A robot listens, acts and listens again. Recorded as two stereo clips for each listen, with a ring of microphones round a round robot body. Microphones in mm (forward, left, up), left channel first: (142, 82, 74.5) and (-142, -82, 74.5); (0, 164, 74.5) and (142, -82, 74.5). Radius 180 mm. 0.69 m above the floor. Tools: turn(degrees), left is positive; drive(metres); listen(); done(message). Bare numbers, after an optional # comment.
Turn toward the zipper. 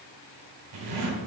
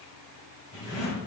# The zipper: 170° right.
turn(-170)
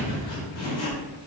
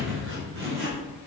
# The zipper is now 15° right.
turn(-15)
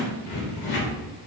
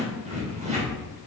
done("Found it: a zipper, straight ahead.")